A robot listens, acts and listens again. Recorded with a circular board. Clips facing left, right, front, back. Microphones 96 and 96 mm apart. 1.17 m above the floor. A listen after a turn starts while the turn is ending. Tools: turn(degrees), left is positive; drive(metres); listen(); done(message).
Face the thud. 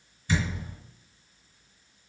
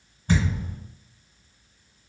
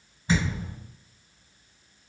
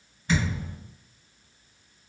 turn(degrees=-65)
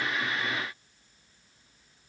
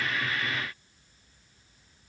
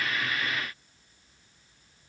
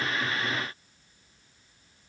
done("Facing where the thud came from. I can't hear it now.")